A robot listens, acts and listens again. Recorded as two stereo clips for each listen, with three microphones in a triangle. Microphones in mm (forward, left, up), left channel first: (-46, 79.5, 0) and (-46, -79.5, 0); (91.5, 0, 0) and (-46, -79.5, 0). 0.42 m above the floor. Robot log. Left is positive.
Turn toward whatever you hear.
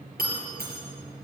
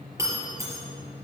note: The breaking glass: 80° right.
cmd yaw -80
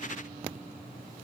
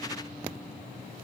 end: Facing where the breaking glass came from. I can't hear it now.